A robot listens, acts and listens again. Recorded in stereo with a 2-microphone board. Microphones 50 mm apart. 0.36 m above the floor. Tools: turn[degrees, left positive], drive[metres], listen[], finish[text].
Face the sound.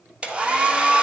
Thought: The hair dryer: about 20° right or 160° right.
Action: turn[-20]
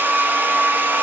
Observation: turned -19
Thought: So it is at 140° right.
Action: turn[-140]
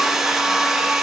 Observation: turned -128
Thought: The hair dryer is now 10° right.
Action: turn[-10]
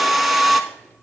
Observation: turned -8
Action: finish[Facing the hair dryer, under 1 m away.]